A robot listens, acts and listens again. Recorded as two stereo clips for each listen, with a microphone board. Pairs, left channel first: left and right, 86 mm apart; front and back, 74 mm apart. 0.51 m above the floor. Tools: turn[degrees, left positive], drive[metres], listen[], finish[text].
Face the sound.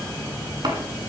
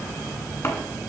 Thought: The chopping: 55° right.
Action: turn[-55]
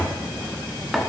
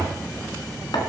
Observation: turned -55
Action: finish[Facing the chopping.]